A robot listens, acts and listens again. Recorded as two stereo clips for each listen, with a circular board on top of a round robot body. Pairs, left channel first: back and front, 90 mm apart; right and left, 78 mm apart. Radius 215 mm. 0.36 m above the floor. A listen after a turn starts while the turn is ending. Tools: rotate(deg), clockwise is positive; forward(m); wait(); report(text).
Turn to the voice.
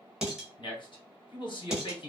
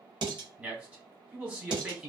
rotate(-160)
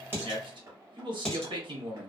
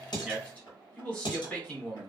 rotate(20)
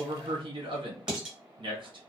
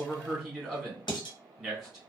report("Found it: a man speaking, straight ahead, 1 to 2 m away.")